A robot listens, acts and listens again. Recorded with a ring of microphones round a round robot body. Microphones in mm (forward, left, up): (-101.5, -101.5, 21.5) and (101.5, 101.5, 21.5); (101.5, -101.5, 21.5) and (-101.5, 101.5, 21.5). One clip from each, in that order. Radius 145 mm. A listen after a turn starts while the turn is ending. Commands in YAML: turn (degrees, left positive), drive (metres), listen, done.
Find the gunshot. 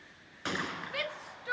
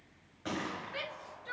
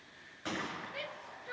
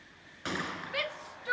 turn: -160
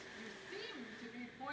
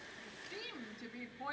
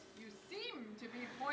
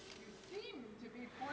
done: "I heard a gunshot from this way, but can't make it out now."